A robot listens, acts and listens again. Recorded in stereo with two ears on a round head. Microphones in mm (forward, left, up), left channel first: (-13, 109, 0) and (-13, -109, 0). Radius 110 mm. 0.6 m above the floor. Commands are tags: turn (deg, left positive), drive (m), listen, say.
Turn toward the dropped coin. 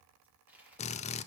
<turn deg="-30"/>
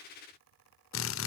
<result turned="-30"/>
<listen/>
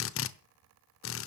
<say>I heard a dropped coin, but can't make it out now. It was about 25° left or 145° right.</say>